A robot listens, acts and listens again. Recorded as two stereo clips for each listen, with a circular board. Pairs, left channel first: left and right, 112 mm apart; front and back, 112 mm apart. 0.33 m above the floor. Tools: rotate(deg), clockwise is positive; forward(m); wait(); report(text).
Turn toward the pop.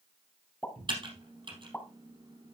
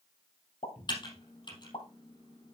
rotate(-15)
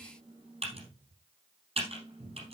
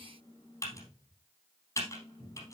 report("I heard a pop from this way, but can't make it out now.")